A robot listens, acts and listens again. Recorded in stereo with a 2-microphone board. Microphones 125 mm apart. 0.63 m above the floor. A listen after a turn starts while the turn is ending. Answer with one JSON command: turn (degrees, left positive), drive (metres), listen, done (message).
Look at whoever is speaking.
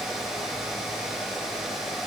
{"listen": true}
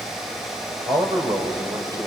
{"turn": -35}
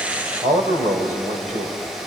{"turn": -110}
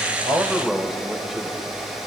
{"done": "Facing the man speaking, 2 to 4 m away."}